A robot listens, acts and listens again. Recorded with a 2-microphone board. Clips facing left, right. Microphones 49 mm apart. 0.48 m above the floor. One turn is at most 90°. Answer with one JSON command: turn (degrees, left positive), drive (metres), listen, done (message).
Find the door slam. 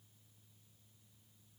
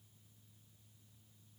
{"listen": true}
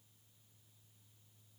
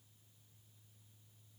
{"listen": true}
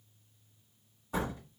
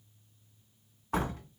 {"turn": -55}
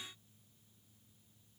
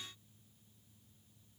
{"listen": true}
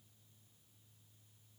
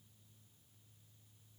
{"done": "I heard a door slam, but can't make it out now. It was about straight ahead or 70° right."}